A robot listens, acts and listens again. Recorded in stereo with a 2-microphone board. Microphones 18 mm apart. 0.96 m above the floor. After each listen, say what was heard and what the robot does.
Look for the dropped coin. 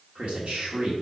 Keep listening.
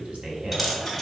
Turn 30° left.
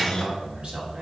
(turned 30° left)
Keep listening.
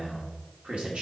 I heard a dropped coin, but can't make it out now. It was about 30° right or 150° left.